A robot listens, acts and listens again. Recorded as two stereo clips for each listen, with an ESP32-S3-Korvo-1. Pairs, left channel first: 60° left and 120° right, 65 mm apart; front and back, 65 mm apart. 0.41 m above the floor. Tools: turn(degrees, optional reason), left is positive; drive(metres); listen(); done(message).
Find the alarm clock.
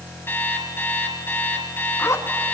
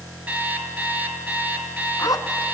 turn(degrees=115, reason="The alarm clock: 115° left.")
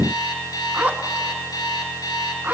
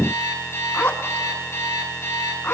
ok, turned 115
turn(degrees=50, reason="The alarm clock is now 50° left.")
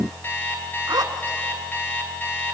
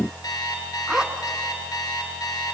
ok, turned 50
done("Facing the alarm clock, 2 to 4 m away.")